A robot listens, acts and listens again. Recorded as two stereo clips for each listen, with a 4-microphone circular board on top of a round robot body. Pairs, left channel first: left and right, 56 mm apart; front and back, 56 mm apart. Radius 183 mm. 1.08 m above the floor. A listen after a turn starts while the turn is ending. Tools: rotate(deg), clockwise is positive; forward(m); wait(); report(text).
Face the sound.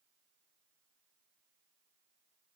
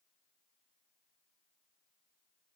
wait()
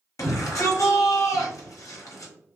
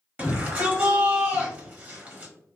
rotate(-120)
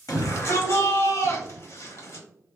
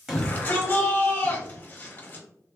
rotate(-60)
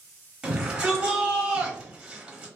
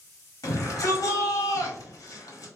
rotate(10)
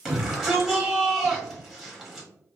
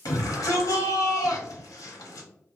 report("Facing the shout.")